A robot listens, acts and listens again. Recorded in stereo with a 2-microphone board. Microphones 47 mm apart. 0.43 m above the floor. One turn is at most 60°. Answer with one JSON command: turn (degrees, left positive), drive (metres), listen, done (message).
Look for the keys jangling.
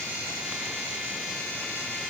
{"listen": true}
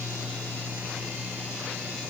{"listen": true}
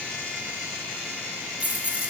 {"turn": -30}
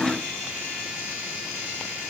{"listen": true}
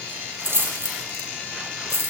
{"turn": -60}
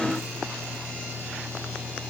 {"turn": -60}
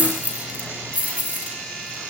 {"turn": -30}
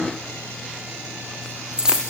{"turn": -15}
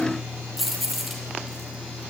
{"done": "Facing the keys jangling."}